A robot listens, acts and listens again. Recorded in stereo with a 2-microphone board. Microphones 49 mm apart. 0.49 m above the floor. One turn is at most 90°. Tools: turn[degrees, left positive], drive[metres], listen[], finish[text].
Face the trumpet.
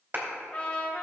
Thought: The trumpet: about 30° left or 150° left.
Action: turn[30]
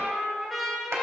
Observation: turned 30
Action: finish[Found it: a trumpet, straight ahead, 1 to 2 m away.]